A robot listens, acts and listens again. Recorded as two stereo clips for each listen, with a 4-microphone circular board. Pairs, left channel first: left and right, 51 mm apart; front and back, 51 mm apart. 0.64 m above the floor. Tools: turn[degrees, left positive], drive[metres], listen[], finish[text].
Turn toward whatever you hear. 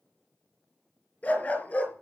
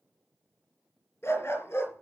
Thought: The dog barking: 35° left.
Action: turn[35]
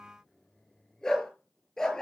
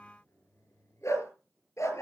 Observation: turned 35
Thought: The dog barking is now 15° left.
Action: turn[15]
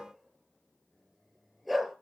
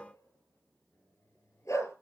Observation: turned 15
Action: finish[Facing the dog barking.]